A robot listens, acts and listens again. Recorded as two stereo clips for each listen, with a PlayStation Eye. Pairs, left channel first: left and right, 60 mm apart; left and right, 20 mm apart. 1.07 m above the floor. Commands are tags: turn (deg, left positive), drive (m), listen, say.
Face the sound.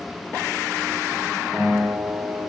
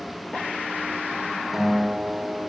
<turn deg="30"/>
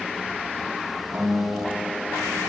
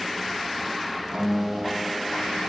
<turn deg="-25"/>
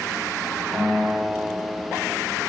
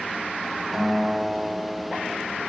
<say>Found it: a guitar, straight ahead, 2 to 4 m away.</say>